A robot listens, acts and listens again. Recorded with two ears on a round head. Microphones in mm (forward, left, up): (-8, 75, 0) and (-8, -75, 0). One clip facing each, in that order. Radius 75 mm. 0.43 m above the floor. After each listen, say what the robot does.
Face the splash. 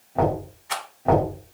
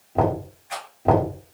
Keep listening.
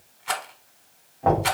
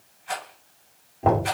Keep listening.
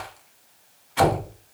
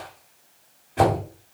I can't make out a splash, only knocking and a rattle.